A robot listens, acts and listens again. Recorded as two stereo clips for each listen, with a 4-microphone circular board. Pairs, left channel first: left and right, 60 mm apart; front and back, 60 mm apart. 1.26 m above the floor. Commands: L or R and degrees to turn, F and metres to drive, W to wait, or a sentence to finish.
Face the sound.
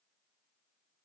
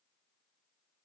W
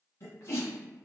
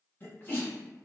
L55
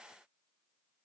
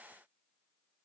I heard a sneeze from this way, but can't make it out now.